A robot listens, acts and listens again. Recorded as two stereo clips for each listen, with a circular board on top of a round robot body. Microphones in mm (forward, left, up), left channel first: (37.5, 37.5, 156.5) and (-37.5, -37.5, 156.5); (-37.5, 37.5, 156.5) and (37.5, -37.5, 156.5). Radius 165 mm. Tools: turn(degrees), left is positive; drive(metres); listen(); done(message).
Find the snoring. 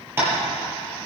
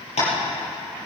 listen()
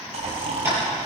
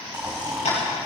turn(degrees=-120)
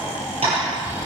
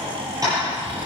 turn(degrees=-15)
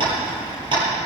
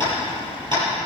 done("Facing the snoring.")